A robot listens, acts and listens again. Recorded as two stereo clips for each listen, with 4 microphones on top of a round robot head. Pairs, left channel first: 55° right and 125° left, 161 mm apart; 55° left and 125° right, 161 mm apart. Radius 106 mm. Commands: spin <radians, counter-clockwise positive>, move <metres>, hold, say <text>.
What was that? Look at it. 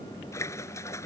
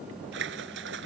spin -2.27
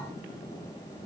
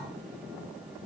say I heard a splash from this way, but can't make it out now.